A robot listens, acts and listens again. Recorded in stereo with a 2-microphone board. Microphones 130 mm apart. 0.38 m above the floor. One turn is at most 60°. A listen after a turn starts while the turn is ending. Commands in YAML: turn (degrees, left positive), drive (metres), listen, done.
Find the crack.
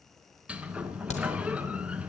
turn: 60
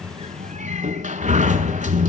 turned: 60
listen: true
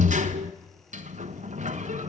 done: "I heard a crack, but can't make it out now. It was about 5° left or 55° left."